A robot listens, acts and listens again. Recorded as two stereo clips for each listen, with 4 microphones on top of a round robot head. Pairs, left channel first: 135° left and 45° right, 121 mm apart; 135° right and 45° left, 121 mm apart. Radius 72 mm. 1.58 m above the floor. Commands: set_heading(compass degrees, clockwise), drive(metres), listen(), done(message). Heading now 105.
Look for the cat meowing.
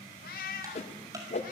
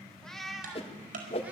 set_heading(335)
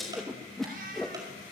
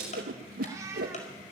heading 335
set_heading(0)
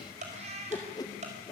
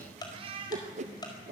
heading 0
done("Facing the cat meowing, 2 to 4 m away.")